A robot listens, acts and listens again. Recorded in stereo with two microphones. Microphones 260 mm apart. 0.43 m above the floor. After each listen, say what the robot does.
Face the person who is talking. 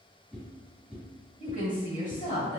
Turn 30° left.
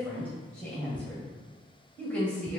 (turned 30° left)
Found it: a woman speaking, straight ahead.